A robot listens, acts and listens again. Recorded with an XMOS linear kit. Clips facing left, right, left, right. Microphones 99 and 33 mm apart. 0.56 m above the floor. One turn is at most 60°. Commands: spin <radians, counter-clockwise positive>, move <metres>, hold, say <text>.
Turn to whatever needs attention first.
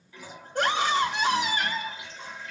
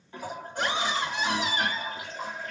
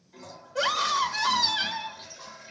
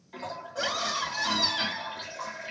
spin 1.05
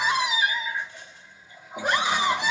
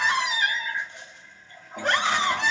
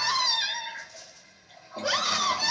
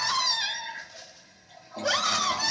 spin 0.26
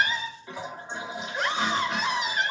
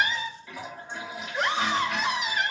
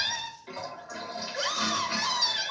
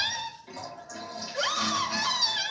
say Facing the scream.